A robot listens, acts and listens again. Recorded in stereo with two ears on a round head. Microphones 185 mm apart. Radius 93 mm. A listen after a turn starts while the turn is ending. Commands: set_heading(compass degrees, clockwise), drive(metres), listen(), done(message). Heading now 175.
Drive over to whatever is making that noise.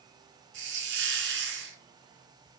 set_heading(235)
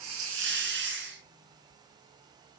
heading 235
set_heading(295)
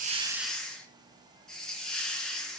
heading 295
drive(1.0)
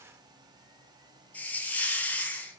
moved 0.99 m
set_heading(285)
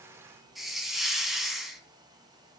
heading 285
drive(1.0)
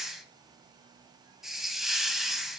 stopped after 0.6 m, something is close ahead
done("Arrived at the hiss, straight ahead.")